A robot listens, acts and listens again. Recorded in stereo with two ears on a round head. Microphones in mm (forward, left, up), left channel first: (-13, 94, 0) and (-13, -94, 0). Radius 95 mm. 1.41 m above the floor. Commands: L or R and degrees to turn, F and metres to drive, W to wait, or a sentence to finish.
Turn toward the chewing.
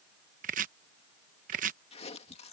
L30
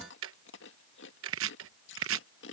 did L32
L120
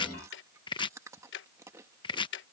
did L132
R15
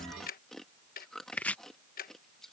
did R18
Found it: chewing, straight ahead.